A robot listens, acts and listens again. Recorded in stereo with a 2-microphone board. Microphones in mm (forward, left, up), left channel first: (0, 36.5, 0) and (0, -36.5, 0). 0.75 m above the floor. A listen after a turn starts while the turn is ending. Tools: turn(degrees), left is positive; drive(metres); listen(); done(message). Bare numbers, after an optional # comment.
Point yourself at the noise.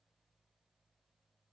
listen()
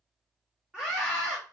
turn(-30)
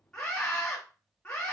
# So it is at 20° left.
turn(20)
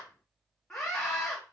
# The scream is now 10° left.
turn(10)
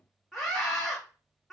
done("Found it: a scream, straight ahead.")